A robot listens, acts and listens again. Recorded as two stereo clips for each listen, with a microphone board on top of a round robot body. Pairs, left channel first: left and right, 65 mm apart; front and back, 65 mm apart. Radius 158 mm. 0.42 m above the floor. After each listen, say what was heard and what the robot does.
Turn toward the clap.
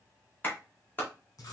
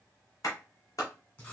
The clap: 30° left. Turn 30° left.
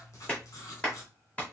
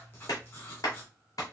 The clap is now 20° left. Turn 20° left.
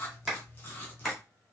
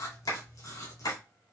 Found it: a clap, straight ahead, 1 to 2 m away.